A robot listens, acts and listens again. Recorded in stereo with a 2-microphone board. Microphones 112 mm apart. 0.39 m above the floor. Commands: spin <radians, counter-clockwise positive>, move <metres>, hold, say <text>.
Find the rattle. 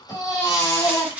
spin -0.52
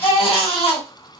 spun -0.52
hold
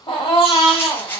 spin 0.35
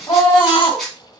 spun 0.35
say Found it: a rattle, straight ahead.